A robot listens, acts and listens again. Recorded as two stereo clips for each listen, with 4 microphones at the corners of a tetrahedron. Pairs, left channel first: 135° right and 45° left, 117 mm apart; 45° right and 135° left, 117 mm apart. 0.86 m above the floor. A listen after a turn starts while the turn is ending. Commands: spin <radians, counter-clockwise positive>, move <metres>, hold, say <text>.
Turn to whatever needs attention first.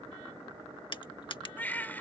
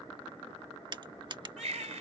spin 2.62
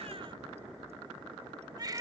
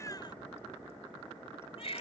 spin -0.17
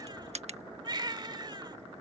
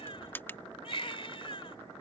say Found it: a baby crying, straight ahead.